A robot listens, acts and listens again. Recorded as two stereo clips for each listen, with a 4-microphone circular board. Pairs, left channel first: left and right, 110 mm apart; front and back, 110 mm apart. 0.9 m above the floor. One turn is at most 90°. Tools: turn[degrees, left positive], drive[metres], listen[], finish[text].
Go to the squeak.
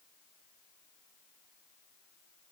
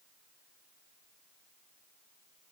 Action: listen[]
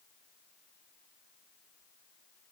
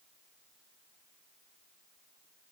Action: listen[]
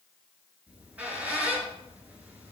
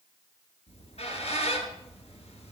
Thought: The squeak: 10° right.
Action: turn[-10]
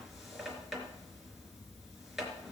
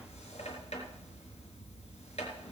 Action: drive[1.0]
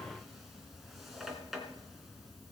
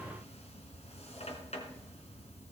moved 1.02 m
Action: drive[1.0]
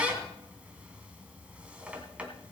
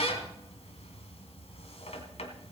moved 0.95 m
Thought: The squeak is now 10° right.
Action: turn[-10]
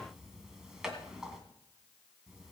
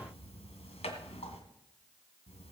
Action: drive[1.0]
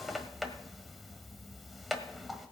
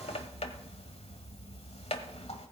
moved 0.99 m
Action: drive[1.0]
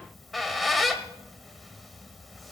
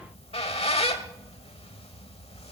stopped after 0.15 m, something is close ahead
Action: finish[Arrived at the squeak, straight ahead.]